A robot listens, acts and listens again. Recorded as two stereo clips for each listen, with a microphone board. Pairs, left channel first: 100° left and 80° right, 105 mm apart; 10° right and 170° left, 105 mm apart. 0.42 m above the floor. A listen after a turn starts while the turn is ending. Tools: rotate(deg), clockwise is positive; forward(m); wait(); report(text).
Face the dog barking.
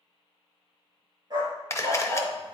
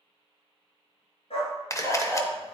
rotate(35)
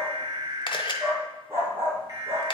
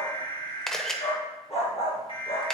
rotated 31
rotate(15)
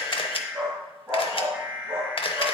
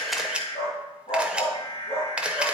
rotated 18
report("Found it: a dog barking, straight ahead, over 4 m away.")